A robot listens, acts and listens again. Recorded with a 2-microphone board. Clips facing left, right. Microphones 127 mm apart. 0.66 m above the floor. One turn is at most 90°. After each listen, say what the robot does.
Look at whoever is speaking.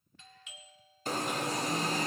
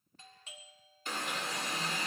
Keep listening.
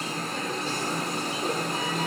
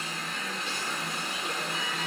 Keep listening.
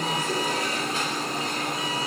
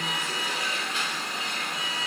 I can't make out anyone speaking, only an alarm and a doorbell.